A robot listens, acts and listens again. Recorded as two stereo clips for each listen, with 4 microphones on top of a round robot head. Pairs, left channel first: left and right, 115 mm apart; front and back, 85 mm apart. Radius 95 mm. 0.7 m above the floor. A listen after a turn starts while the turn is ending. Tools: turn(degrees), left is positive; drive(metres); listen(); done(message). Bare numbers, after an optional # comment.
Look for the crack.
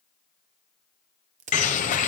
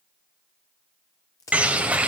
# The crack: 65° right.
turn(-65)
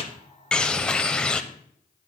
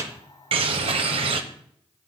done("I heard a crack from this way, but can't make it out now.")